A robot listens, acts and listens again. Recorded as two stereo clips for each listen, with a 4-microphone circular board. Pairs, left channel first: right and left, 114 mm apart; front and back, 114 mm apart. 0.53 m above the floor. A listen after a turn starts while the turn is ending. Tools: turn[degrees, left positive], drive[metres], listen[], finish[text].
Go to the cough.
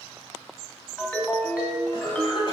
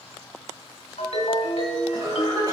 Thought: The cough: 130° right.
Action: turn[-130]
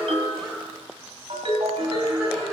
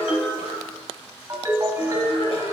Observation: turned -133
Action: drive[1.0]
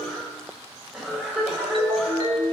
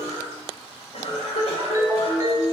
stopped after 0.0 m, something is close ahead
Action: finish[Blocked. The cough is further on, straight ahead.]